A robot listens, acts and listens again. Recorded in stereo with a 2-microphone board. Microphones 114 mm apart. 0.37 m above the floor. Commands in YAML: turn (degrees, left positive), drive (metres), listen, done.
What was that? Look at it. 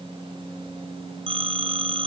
turn: -55
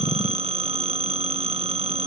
turn: -65
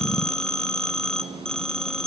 done: "Facing the phone ringing."